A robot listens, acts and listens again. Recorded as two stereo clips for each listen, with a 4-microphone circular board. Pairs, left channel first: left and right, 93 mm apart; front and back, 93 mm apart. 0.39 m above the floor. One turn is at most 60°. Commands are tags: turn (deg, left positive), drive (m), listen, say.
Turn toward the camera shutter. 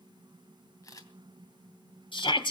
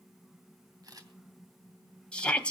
<turn deg="60"/>
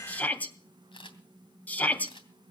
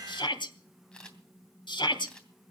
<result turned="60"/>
<turn deg="60"/>
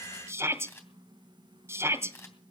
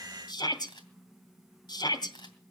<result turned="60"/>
<turn deg="30"/>
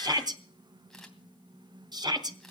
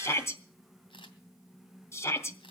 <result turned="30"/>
<say>Facing the camera shutter, 2 to 4 m away.</say>